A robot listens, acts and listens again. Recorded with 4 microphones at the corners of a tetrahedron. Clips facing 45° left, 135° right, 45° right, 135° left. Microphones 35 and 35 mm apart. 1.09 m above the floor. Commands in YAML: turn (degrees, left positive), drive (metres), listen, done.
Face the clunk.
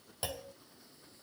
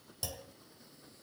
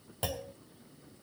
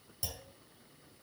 turn: -10
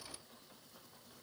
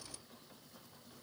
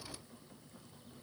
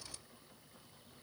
done: "Facing where the clunk came from. I can't hear it now."